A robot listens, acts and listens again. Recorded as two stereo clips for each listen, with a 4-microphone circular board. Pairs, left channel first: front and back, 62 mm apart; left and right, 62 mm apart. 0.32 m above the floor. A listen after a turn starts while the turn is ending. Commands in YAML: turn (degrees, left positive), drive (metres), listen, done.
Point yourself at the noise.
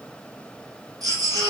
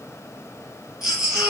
turn: -170
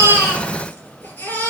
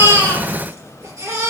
turn: -60
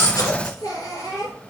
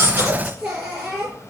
turn: -15
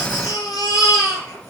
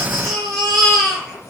done: "Facing the baby crying."